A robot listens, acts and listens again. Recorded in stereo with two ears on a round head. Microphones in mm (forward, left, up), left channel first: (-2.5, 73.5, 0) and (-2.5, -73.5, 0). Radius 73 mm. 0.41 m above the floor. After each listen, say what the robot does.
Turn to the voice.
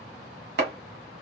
Keep listening.
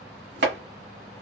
Keep listening.
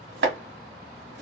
I can't make out anyone speaking to turn to.